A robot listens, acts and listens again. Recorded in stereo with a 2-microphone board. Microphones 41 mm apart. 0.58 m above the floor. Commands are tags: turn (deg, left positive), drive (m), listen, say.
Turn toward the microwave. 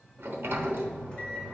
<turn deg="30"/>
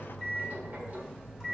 <say>Found it: a microwave, straight ahead, 2 to 4 m away.</say>